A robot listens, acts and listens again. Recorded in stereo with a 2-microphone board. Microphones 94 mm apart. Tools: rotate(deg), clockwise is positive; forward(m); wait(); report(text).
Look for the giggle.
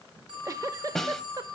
rotate(35)
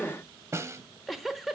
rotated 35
report("Found it: a giggle, straight ahead.")